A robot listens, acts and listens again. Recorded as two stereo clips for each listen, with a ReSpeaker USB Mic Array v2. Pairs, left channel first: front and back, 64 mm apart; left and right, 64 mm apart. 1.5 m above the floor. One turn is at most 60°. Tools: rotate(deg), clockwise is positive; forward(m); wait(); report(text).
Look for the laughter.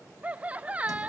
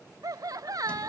rotate(60)
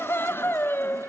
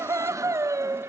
rotate(55)
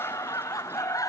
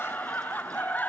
rotate(-25)
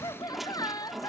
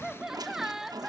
report("Found it: laughter, straight ahead.")